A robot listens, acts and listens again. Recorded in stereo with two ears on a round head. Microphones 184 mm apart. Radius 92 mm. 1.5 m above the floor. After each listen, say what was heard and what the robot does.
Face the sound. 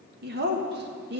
The woman speaking: about 60° right or 120° right. Turn 60° right.
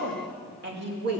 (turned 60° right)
So it is at 55° right. Turn 55° right.
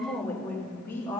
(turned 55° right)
The woman speaking is now 10° left. Turn 10° left.
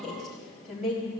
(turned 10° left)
Found it: a woman speaking, straight ahead, 2 to 4 m away.